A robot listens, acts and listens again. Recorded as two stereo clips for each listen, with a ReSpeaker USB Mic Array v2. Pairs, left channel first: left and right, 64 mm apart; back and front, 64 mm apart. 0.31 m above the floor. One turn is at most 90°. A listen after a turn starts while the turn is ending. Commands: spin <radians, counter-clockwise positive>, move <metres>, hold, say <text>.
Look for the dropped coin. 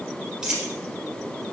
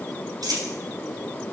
spin -0.17
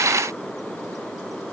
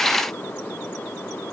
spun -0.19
say I heard a dropped coin from this way, but can't make it out now.